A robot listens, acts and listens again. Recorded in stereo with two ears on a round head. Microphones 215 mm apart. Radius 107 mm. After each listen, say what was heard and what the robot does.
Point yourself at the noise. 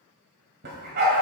The dog barking: about 40° right or 140° right. Turn 40° right.
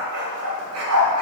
So it is at 120° right. Turn 120° right.
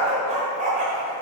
The dog barking is now 35° right. Turn 35° right.
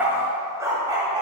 The dog barking is now 20° right. Turn 20° right.
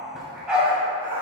Found it: a dog barking, straight ahead, 2 to 4 m away.